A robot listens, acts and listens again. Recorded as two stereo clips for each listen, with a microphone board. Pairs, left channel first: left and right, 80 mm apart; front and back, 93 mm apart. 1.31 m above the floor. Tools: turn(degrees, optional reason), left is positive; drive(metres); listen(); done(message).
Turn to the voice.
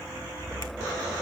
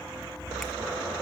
listen()
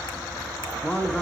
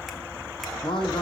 turn(degrees=20, reason="The man speaking: 20° left.")
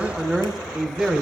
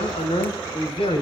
done("Found it: a man speaking, straight ahead.")